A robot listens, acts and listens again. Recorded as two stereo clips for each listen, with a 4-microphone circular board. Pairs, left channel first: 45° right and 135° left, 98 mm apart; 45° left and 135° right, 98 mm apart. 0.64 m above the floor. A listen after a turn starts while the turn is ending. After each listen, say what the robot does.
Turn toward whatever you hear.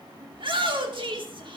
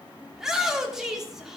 Turn 140° left.
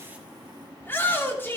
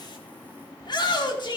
Turn 20° left.
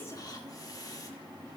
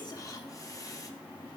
Keep listening.
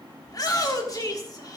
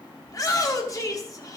Facing the shout.